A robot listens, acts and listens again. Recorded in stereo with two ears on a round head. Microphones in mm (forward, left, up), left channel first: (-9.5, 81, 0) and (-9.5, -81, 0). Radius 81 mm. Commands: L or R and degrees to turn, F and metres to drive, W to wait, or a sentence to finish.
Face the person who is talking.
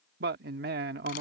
R60
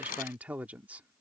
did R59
R10
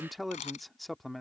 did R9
Found it: a man speaking, straight ahead.